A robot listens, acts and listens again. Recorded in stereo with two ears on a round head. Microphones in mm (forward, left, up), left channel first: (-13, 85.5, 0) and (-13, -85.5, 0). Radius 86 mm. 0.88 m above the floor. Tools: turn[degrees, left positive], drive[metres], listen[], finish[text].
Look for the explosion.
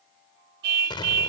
Thought: The explosion: about 25° left or 155° left.
Action: turn[25]
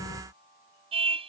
Action: listen[]
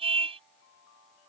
Action: finish[I heard an explosion, but can't make it out now. It was about straight ahead or 130° left.]